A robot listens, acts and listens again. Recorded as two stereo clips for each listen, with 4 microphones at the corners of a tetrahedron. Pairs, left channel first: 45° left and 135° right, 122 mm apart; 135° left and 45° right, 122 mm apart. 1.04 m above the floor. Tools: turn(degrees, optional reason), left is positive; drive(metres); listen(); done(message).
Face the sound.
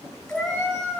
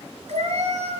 turn(degrees=-40, reason="The cat meowing: 40° right.")
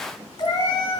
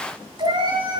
done("Found it: a cat meowing, straight ahead.")